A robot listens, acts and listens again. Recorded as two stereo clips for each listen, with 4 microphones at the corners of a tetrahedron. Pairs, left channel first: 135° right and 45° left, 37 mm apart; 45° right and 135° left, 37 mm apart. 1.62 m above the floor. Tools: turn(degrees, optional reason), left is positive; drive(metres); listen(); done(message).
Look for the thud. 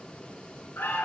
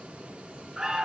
listen()
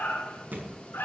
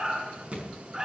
turn(degrees=75, reason="The thud: 75° left.")
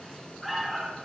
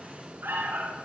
done("I heard a thud from this way, but can't make it out now.")